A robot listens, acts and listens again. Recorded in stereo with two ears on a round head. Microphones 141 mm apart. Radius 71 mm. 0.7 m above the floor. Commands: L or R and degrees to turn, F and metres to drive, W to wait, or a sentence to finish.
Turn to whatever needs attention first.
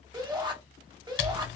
R30
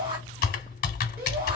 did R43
R105
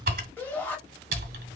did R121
L15
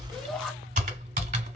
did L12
Facing the shout, 1 to 2 m away.